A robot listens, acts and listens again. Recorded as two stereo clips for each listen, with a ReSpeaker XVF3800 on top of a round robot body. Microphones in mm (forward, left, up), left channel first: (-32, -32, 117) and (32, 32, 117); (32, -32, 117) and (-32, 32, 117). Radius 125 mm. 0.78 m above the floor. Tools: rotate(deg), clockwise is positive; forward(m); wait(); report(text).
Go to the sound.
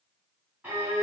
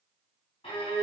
rotate(30)
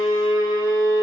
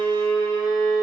forward(1.0)
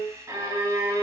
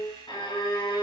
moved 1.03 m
rotate(15)
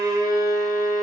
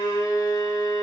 forward(1.0)
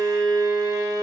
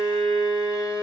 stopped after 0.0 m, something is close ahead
report("Arrived at the violin, straight ahead.")